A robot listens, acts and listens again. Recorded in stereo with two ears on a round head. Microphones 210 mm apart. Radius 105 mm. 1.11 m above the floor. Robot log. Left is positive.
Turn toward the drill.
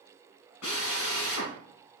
note: The drill: about 75° left or 105° left.
cmd yaw +75
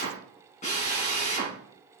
note: So it is at 30° left.
cmd yaw +30
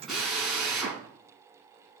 end: Found it: a drill, straight ahead, over 4 m away.